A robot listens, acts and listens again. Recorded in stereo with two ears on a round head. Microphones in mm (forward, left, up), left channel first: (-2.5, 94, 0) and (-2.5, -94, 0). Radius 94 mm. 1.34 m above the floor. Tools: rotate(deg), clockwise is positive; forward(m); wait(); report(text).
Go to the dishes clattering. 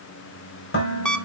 rotate(-50)
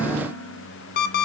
forward(1.0)
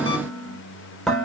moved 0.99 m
forward(1.0)
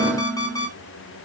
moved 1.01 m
forward(1.0)
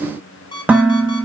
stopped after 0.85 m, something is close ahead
rotate(10)
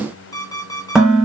report("I am next to the dishes clattering.")